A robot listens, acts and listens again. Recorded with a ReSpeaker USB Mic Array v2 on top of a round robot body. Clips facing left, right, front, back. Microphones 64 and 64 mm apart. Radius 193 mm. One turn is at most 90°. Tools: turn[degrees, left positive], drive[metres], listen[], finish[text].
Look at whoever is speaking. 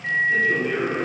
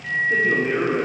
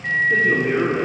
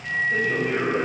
Thought: The man speaking: 35° right.
Action: turn[-35]
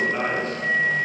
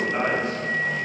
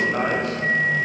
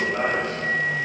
Thought: The man speaking is now 15° right.
Action: turn[-15]
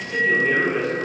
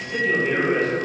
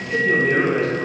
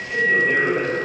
Action: finish[Found it: a man speaking, straight ahead.]